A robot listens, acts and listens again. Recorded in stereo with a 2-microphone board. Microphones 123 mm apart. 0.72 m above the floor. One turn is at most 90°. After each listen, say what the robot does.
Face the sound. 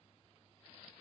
Keep listening.
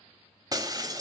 Turn 30° right.
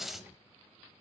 Facing the breaking glass, 1 to 2 m away.